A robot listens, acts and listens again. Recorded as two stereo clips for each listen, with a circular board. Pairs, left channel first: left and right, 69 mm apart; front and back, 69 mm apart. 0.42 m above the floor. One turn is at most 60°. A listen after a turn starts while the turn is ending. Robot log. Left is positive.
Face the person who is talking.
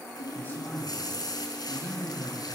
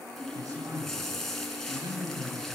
note: The man speaking: 150° left.
cmd yaw +60
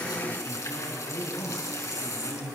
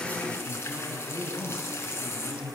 note: The man speaking is now 120° left.
cmd yaw +60
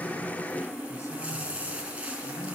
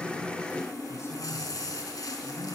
note: Nothing new. It was at 60° left.
cmd yaw +60
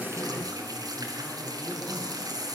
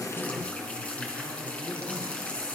cmd idle
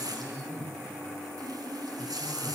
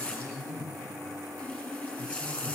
end: Found it: a man speaking, straight ahead.